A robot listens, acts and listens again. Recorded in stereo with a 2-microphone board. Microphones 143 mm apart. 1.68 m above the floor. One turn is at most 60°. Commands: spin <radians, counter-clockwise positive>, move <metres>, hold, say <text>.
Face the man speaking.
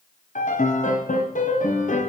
hold
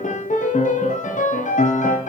hold
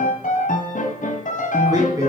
spin -0.35
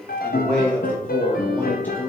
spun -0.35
spin 0.17
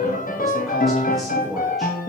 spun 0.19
say Found it: a man speaking, straight ahead, 2 to 4 m away.